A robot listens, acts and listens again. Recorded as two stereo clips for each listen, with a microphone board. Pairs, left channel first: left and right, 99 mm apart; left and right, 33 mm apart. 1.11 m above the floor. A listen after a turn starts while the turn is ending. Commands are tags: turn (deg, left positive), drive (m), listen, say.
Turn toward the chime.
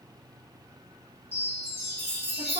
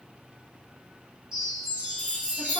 <turn deg="-20"/>
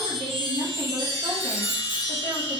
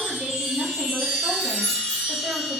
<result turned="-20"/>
<say>Found it: a chime, straight ahead, 1 to 2 m away.</say>